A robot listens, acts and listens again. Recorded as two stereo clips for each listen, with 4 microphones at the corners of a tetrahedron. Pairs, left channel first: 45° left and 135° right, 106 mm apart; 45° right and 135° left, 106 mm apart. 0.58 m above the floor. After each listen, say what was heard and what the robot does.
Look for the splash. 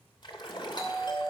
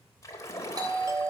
The splash: 10° left. Turn 10° left.
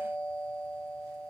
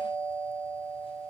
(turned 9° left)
I heard a splash from this way, but can't make it out now.